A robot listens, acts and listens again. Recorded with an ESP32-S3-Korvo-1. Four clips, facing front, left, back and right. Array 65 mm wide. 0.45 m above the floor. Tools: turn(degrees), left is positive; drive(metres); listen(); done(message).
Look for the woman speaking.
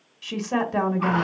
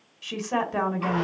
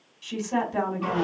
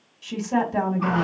turn(degrees=40)
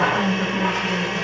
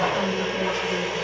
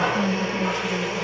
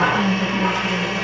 turn(degrees=10)
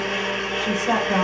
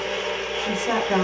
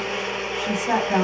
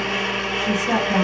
turn(degrees=35)
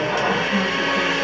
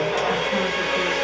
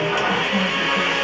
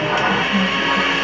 listen()
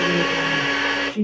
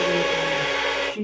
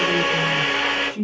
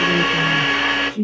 turn(degrees=35)
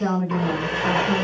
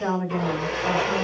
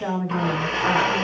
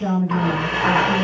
turn(degrees=25)
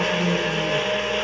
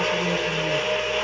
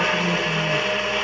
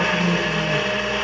listen()
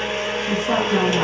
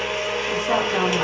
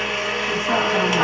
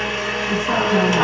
listen()
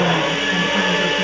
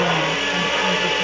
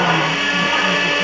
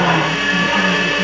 done("Facing where the woman speaking came from. I can't hear it now.")